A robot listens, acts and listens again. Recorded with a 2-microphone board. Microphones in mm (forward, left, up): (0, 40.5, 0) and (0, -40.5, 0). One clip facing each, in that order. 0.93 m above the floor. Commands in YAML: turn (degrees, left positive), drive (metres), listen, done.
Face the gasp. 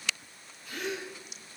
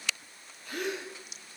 turn: -55
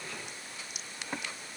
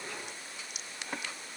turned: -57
listen: true
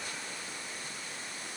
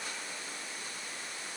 done: "I heard a gasp, but can't make it out now. It was about straight ahead or 70° right."